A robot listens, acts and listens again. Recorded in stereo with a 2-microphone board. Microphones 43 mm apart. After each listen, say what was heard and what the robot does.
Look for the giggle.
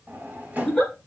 Turn 30° left.
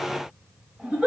So it is at 20° right. Turn 20° right.
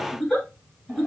Found it: a giggle, straight ahead, 2 to 4 m away.